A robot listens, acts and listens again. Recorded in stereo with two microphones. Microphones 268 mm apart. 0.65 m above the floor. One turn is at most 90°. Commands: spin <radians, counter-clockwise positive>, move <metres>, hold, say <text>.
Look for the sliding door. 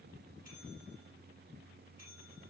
hold
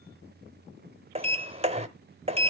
spin -0.44
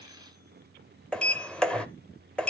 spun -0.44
say Facing the sliding door, under 1 m away.